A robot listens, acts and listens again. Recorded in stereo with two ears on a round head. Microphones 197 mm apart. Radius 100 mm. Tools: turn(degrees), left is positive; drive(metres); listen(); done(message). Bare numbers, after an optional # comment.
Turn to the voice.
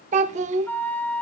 # The child speaking: about 30° right or 150° right.
turn(-30)
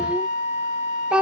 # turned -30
done("Found it: a child speaking, straight ahead.")